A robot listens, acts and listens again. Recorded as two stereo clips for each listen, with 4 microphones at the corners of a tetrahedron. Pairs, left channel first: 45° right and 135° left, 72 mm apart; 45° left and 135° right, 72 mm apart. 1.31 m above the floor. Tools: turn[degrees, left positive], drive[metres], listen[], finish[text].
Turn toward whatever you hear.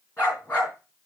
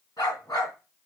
Thought: The dog barking: 20° left.
Action: turn[20]
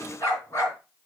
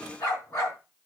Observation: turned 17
Action: finish[Facing the dog barking, over 4 m away.]